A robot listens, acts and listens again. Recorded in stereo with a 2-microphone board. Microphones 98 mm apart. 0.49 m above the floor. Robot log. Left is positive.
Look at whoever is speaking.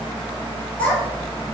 cmd yaw +30
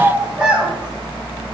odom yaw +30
note: So it is at 10° right.
cmd yaw -10
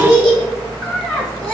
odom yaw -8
end: Found it: a child speaking, straight ahead, 2 to 4 m away.